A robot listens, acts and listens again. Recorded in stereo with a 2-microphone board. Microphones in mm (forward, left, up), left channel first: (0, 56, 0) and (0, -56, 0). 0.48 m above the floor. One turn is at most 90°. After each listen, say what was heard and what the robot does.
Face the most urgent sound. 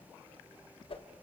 Keep listening.
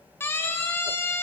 The siren: about 20° left or 160° left. Turn 20° left.
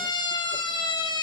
So it is at 140° left. Turn 90° left.
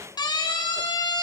The siren is now 40° left. Turn 40° left.
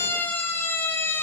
The siren is now 20° left. Turn 20° left.
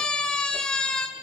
Facing the siren.